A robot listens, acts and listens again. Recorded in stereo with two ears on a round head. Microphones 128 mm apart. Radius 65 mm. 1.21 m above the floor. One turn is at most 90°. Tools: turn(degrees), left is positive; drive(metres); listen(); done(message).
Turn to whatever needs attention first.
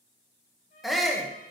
turn(degrees=30)
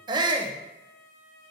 turn(degrees=-30)
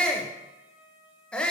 done("Found it: a shout, straight ahead.")